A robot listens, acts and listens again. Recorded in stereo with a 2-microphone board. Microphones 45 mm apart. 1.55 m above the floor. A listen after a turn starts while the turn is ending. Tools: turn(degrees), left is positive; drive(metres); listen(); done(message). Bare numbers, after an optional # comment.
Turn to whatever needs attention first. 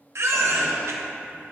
# The baby crying: about 70° right or 110° right.
turn(-70)
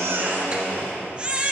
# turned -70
# So it is at 25° right.
turn(-25)
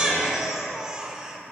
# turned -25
# The baby crying is now 15° right.
turn(-15)
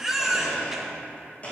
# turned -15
# The baby crying is now 10° right.
turn(-10)
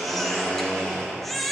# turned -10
done("Facing the baby crying, under 1 m away.")